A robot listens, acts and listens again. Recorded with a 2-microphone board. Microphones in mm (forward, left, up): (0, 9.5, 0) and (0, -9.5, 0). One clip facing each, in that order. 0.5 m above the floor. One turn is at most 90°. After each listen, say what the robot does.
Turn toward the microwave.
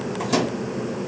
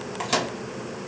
Turn 35° right.
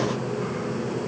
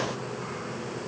Keep listening.
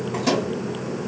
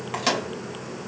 Turn 90° right.
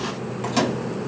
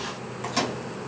Turn 15° left.
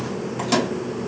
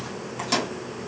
Turn 10° left.
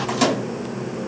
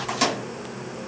Facing the microwave, 2 to 4 m away.